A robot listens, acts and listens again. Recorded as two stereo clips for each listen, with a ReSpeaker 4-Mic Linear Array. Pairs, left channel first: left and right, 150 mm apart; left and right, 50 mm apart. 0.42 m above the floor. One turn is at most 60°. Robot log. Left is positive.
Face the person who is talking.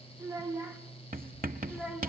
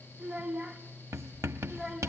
cmd yaw -30
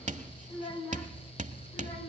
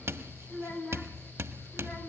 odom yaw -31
note: So it is at 35° left.
cmd yaw +35
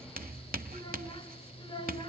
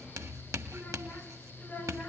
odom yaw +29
note: The child speaking is now 35° left.
cmd yaw +35
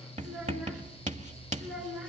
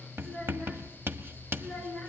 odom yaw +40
end: Found it: a child speaking, straight ahead, over 4 m away.